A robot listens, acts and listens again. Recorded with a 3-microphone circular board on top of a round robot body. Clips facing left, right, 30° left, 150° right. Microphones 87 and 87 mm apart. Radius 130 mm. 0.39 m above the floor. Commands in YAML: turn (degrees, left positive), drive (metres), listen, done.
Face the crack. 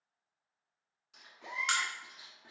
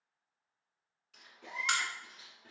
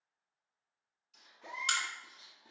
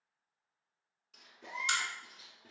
done: "Found it: a crack, straight ahead, under 1 m away."